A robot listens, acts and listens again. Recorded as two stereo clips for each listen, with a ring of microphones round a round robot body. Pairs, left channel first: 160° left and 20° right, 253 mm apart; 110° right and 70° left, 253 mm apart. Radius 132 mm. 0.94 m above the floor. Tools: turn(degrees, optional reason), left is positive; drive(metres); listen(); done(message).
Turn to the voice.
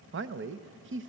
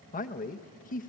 turn(degrees=-60, reason="The man speaking: 60° right.")
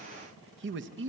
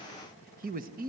turn(degrees=15, reason="The man speaking is now 15° left.")
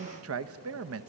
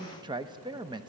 done("Facing the man speaking, under 1 m away.")